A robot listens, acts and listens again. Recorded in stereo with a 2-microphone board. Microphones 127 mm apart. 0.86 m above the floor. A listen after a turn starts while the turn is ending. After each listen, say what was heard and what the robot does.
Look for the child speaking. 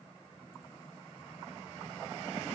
Keep listening.
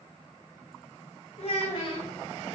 The child speaking: about 40° left or 140° left. Turn 40° left.
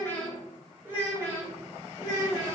So it is at 30° right. Turn 30° right.
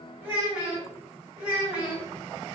The child speaking is now 10° right. Turn 10° right.
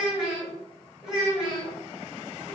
Found it: a child speaking, straight ahead.